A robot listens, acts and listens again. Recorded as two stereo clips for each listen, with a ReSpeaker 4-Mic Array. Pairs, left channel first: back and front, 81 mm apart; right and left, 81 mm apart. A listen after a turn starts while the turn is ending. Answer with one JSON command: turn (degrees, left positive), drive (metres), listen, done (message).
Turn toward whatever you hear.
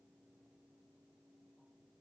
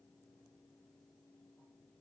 {"listen": true}
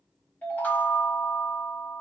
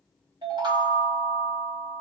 {"turn": 110}
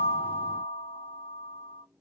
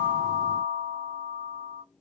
{"done": "Facing the chime, 1 to 2 m away."}